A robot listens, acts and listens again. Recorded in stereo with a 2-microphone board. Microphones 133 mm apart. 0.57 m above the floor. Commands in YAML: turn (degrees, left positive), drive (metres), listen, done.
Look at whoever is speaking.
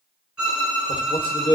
turn: 40
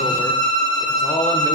turn: 125
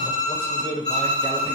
turn: 45
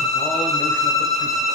listen: true
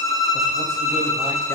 listen: true
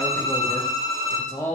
turn: 20
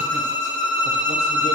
listen: true
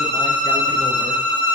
listen: true
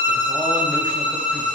done: "I heard a man speaking from this way, but can't make it out now."